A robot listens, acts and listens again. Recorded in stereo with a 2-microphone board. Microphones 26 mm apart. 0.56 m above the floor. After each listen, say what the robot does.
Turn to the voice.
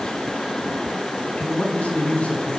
Turn 60° left.
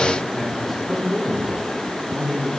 Found it: a man speaking, straight ahead.